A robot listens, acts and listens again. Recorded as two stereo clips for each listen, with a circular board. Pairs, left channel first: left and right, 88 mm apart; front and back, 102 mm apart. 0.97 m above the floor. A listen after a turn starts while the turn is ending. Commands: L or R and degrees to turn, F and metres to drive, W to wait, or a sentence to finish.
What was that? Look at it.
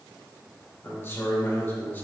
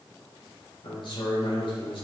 L20
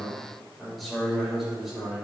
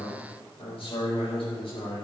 Found it: a man speaking, straight ahead.